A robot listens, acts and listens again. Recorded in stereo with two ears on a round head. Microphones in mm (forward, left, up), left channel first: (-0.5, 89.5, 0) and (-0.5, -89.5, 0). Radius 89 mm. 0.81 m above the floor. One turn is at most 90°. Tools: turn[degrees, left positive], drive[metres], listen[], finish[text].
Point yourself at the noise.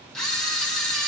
Action: turn[30]
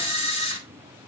Thought: So it is at 145° left.
Action: turn[90]
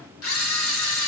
Thought: The camera shutter is now 85° left.
Action: turn[85]
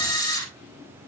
Thought: The camera shutter is now 20° left.
Action: turn[20]
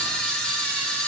Action: finish[Found it: a camera shutter, straight ahead, 2 to 4 m away.]